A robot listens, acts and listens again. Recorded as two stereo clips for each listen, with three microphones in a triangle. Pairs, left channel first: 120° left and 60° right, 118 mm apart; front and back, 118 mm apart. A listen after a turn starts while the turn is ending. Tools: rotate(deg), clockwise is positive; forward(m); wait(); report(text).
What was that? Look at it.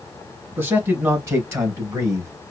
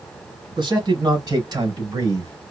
rotate(120)
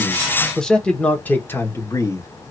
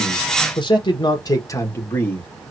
rotate(-70)
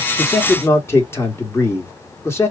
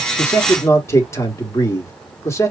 rotate(-60)
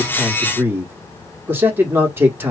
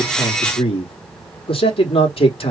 rotate(-10)
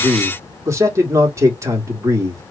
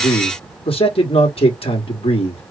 report("Found it: a man speaking, straight ahead, 1 to 2 m away.")